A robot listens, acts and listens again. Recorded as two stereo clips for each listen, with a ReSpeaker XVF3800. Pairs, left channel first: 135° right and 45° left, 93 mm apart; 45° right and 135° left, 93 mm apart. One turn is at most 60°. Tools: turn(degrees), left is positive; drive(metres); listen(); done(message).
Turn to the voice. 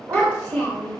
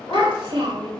turn(degrees=60)
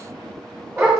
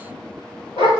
turn(degrees=60)
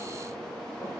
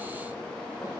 turn(degrees=25)
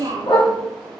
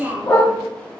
turn(degrees=55)
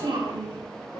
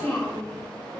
turn(degrees=20)
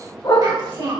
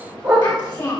done("Facing the child speaking.")